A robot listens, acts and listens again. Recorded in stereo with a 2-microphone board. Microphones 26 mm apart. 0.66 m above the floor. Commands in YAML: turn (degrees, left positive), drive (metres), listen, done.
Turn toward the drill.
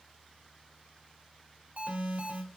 listen: true
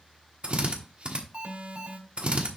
turn: -50
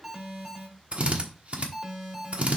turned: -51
turn: -65
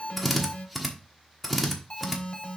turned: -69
done: "Found it: a drill, straight ahead, 1 to 2 m away."